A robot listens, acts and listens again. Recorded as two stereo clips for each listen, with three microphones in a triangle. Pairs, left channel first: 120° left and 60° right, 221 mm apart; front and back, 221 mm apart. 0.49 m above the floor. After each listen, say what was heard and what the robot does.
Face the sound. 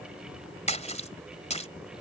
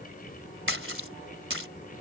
The splash: 175° left. Turn 175° left.
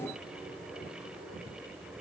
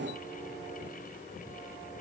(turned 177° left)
Facing where the splash came from. I can't hear it now.